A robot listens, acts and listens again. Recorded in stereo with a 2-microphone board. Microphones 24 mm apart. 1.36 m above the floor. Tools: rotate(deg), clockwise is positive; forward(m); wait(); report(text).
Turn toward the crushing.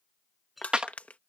rotate(-75)
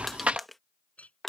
rotate(-10)
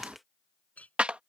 wait()
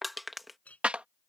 report("Found it: crushing, straight ahead.")